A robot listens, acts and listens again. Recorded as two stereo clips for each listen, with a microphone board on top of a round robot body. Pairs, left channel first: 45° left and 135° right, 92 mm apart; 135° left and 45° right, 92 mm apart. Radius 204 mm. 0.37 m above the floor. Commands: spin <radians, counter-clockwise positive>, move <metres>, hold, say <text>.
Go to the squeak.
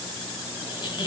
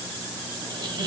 move 1.0
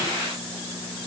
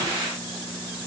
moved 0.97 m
hold
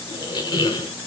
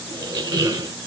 move 1.0
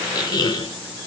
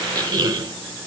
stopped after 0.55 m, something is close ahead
say I am next to the squeak.